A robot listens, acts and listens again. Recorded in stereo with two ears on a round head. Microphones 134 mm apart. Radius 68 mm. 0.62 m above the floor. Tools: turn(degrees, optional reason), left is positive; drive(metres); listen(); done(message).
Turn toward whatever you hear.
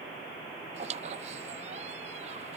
turn(degrees=-50, reason="The squeak: about 50° right or 130° right.")
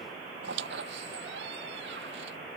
turn(degrees=-80, reason="So it is at 80° right.")
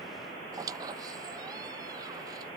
turn(degrees=-25, reason="The squeak is now 25° right.")
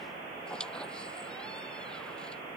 done("Facing the squeak.")